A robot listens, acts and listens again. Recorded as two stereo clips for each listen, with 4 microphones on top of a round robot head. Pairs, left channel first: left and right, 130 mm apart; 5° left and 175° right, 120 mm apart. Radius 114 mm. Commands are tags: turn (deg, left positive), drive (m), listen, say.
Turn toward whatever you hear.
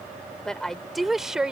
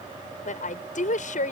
<say>Facing the woman speaking.</say>